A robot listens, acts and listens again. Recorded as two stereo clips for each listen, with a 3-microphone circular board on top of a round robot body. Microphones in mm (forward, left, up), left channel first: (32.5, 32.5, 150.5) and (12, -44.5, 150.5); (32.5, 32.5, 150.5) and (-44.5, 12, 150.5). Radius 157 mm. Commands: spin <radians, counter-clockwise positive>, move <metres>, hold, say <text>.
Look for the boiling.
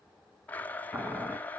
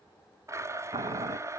spin 3.14
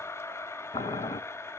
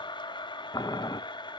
spin 0.96
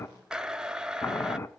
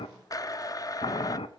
spin 0.26
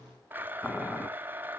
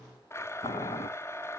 say Found it: boiling, straight ahead.